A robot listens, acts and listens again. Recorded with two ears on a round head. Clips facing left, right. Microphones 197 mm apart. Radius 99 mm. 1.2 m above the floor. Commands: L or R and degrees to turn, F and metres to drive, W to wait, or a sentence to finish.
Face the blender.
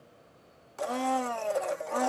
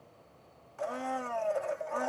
L55
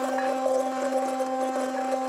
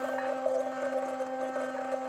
L65
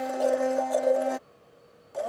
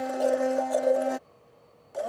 Found it: a blender, straight ahead.